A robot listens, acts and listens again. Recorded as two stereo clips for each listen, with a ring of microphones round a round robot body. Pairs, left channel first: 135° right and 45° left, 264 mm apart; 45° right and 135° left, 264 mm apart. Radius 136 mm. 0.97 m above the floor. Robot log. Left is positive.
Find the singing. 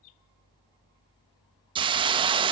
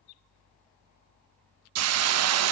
cmd idle
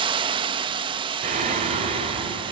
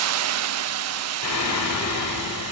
note: The singing: 25° right.
cmd yaw -25
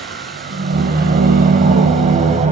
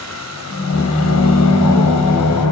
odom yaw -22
note: The singing is now 20° right.
cmd yaw -20
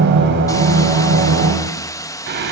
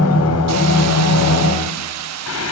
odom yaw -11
end: Found it: singing, straight ahead, over 4 m away.